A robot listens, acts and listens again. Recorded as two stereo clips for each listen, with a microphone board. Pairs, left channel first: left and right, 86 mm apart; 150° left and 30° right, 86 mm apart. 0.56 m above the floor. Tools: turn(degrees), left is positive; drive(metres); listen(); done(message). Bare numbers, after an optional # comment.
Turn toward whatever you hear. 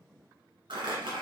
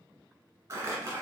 # The crumpling: 75° right.
turn(-75)
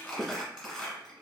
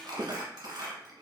done("Facing the crumpling.")